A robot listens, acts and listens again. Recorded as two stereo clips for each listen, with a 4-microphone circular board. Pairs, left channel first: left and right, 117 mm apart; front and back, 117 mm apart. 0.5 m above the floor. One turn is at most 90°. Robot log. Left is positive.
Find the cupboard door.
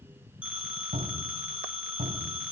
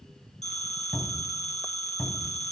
note: The cupboard door: 75° right.
cmd yaw -75
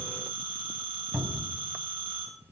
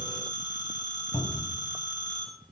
end: Found it: a cupboard door, straight ahead, 2 to 4 m away.